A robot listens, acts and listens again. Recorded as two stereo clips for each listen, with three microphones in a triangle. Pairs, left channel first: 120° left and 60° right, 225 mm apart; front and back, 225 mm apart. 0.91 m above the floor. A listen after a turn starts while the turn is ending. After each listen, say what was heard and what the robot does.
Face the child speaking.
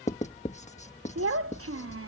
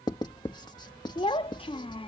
The child speaking: 70° right. Turn 70° right.
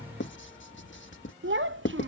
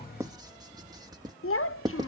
The child speaking is now 25° right. Turn 25° right.
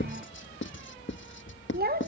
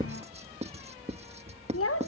The child speaking is now 10° right. Turn 10° right.
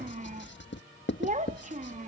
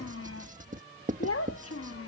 Found it: a child speaking, straight ahead.